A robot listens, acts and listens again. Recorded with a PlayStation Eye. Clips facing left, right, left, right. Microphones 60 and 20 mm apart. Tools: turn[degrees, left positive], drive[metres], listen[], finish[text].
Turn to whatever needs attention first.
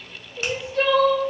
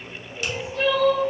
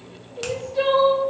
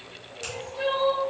Thought: The crying: about 60° left or 120° left.
Action: turn[60]
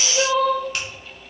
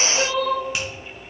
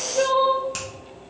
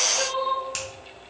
Thought: So it is at 55° left.
Action: turn[55]
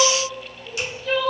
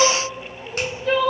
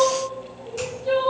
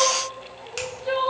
Thought: The crying is now 25° right.
Action: turn[-25]
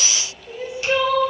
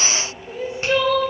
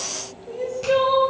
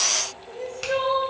Thought: The crying is now 15° left.
Action: turn[15]
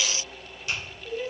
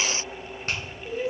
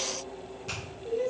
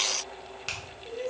Action: finish[Found it: crying, straight ahead.]